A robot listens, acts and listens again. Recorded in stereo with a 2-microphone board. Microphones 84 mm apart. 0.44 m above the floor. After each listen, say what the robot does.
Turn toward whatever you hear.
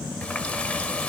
Turn 30° left.
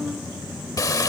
Turn 135° left.
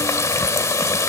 Turn 40° left.
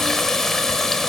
Facing the running tap, 1 to 2 m away.